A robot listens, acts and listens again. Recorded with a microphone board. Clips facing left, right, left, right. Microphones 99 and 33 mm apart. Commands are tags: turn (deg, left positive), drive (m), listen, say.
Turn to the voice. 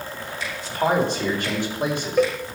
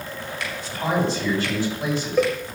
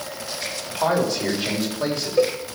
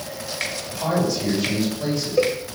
<turn deg="55"/>
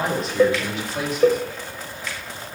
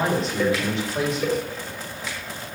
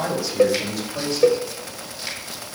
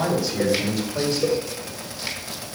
<say>Facing the man speaking, over 4 m away.</say>